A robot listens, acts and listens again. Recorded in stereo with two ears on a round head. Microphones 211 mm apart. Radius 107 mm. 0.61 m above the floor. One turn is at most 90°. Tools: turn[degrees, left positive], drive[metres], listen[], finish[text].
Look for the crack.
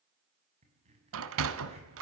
Thought: The crack: about 25° right or 155° right.
Action: turn[-25]
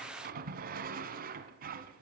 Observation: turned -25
Action: listen[]
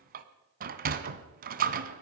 Action: finish[I heard a crack, but can't make it out now. It was about straight ahead or 130° right.]